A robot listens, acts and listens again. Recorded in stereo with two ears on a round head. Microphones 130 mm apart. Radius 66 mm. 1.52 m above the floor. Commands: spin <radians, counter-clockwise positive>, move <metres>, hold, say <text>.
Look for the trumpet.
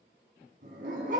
hold
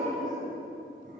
hold
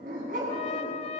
spin 0.70
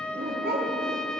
say Found it: a trumpet, straight ahead.